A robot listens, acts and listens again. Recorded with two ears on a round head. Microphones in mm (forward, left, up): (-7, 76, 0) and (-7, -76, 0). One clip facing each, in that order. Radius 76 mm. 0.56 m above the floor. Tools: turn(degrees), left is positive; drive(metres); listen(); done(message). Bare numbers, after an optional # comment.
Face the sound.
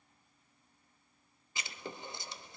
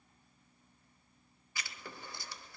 # The writing: about 20° left or 160° left.
turn(20)
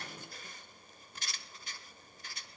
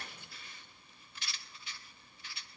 # So it is at 145° left.
turn(145)
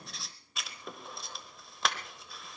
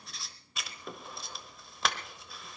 done("Found it: writing, straight ahead.")